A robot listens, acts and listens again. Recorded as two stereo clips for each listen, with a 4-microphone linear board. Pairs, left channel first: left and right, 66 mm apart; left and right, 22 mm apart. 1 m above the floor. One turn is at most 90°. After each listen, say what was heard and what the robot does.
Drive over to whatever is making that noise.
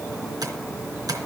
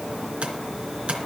The tapping: about 70° right or 110° right. Turn 70° right.
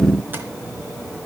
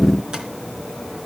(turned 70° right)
Keep listening.
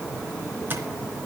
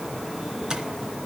So it is at 35° right. Turn 35° right.
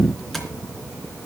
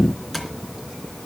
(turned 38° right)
Keep listening.
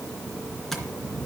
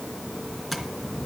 Drive 1.0 m forward.
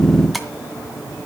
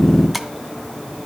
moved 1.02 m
Drive 1.0 m forward.
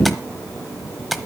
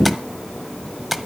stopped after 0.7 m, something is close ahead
I am next to the tapping.